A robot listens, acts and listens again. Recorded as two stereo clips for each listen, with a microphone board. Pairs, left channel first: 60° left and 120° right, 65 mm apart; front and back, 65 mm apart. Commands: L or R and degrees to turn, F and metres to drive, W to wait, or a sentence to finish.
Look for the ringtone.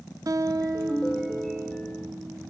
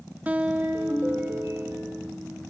L140
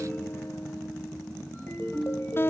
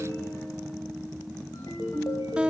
Found it: a ringtone, straight ahead, over 4 m away.